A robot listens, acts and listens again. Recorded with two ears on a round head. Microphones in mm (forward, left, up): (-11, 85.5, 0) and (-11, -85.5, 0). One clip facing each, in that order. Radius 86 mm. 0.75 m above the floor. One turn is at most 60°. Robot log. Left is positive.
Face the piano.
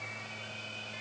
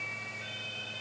cmd idle
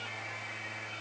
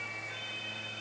cmd idle
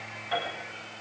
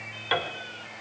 cmd yaw -60
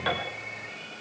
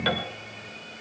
note: Nothing new. It was at 30° right.
cmd yaw -30
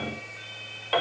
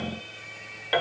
note: The piano is now 10° right.
cmd yaw -10
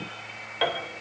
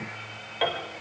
end: Found it: a piano, straight ahead, 2 to 4 m away.